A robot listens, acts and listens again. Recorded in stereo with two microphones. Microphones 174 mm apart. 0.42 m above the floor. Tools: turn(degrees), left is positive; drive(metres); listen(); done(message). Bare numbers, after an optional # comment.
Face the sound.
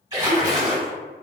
# The splash: about 25° right or 155° right.
turn(-25)
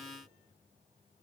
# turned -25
listen()
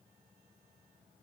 done("I heard a splash, but can't make it out now. It was about straight ahead or 130° right.")